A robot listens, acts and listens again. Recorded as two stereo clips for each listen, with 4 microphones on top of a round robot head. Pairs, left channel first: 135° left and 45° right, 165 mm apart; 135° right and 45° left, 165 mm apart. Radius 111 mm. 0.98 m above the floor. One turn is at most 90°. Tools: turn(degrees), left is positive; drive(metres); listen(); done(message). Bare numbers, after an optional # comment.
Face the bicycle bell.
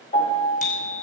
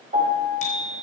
# The bicycle bell: straight behind.
turn(90)
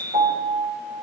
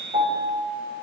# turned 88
# The bicycle bell is now 90° left.
turn(90)
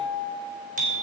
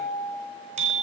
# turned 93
done("Facing the bicycle bell.")